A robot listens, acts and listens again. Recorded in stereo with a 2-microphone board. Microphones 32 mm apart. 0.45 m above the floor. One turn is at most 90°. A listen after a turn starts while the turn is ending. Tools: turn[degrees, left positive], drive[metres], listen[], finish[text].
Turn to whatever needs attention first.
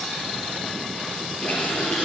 Action: listen[]
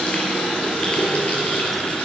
Action: listen[]
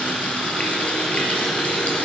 Action: finish[I can't make out anything urgent to turn to.]